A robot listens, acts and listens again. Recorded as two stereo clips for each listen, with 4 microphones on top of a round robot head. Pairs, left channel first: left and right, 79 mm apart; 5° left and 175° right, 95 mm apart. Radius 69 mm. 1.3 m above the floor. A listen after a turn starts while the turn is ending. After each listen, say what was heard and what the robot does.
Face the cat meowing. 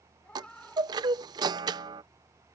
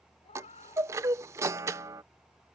The cat meowing: 15° left. Turn 15° left.
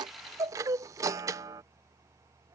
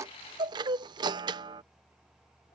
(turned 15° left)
Keep listening.
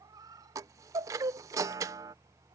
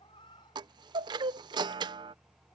The cat meowing is now 50° right. Turn 50° right.
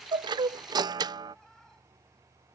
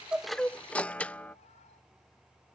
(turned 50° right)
Keep listening.
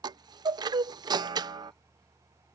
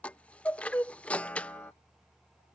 Keep listening.
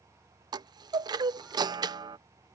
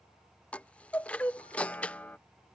I heard a cat meowing from this way, but can't make it out now.